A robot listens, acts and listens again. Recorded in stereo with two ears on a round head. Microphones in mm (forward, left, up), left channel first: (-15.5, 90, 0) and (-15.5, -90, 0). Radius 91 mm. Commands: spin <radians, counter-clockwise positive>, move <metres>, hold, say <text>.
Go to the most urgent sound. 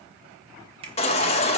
spin 0.52
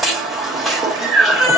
move 1.0
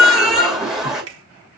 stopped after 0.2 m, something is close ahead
say Blocked. The baby crying is further on, straight ahead.